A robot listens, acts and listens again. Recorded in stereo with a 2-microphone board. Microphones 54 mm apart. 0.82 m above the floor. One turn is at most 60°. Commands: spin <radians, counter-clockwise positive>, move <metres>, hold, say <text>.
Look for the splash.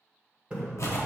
spin -0.35
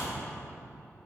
hold
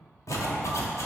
say I heard a splash, but can't make it out now. It was about straight ahead or 140° right.